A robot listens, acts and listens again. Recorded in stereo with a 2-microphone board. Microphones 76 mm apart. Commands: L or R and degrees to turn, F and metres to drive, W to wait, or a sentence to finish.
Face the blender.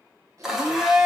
R30
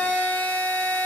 L25
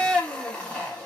L15
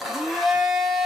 Found it: a blender, straight ahead.